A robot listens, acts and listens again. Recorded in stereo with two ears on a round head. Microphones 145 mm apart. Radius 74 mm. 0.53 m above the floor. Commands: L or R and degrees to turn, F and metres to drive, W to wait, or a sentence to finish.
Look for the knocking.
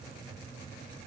W
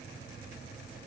W
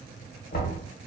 L60
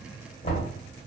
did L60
L45
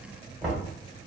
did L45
R10
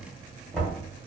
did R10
Found it: knocking, straight ahead, 1 to 2 m away.